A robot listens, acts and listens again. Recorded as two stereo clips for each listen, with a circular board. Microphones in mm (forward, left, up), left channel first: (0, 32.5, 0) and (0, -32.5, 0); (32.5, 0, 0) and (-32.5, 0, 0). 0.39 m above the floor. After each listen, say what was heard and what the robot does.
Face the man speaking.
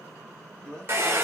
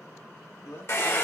The man speaking: 10° left. Turn 10° left.
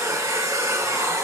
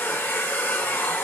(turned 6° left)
Keep listening.
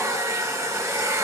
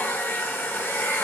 Keep listening.
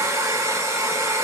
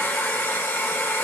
I heard a man speaking from this way, but can't make it out now.